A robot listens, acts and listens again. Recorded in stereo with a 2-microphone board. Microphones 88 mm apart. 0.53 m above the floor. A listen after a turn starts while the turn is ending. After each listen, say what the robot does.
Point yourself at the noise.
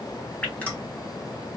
Turn 15° left.
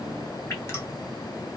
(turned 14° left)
Turn 150° left.
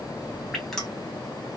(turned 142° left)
Facing the dripping.